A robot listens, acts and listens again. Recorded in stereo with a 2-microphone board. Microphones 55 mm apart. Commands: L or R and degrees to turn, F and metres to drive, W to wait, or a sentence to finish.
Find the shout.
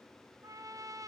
W
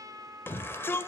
L40
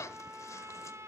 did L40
L90
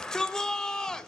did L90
L10
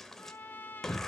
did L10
Found it: a shout, straight ahead, 1 to 2 m away.